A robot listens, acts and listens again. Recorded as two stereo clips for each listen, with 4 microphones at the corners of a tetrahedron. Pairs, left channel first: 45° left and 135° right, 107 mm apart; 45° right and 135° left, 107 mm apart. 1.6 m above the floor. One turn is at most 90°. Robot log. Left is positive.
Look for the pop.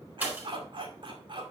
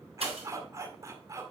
note: The pop: 150° left.
cmd yaw +90
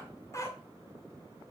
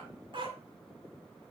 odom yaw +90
note: Nothing new. It was at 60° left.
cmd yaw +60
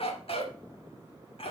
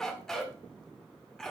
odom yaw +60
end: I heard a pop from this way, but can't make it out now.